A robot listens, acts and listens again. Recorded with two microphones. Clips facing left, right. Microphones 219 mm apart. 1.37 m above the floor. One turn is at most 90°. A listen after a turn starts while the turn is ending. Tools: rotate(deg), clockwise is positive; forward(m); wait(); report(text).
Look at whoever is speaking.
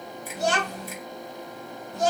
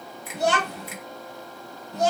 rotate(65)
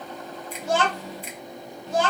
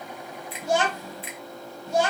rotate(15)
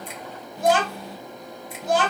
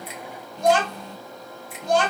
report("Found it: a child speaking, straight ahead.")